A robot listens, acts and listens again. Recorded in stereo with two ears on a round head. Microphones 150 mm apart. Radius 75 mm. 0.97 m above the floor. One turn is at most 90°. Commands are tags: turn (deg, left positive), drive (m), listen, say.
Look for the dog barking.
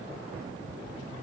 <listen/>
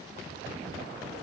<listen/>
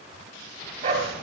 <turn deg="-45"/>
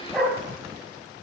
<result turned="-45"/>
<say>Found it: a dog barking, straight ahead, 2 to 4 m away.</say>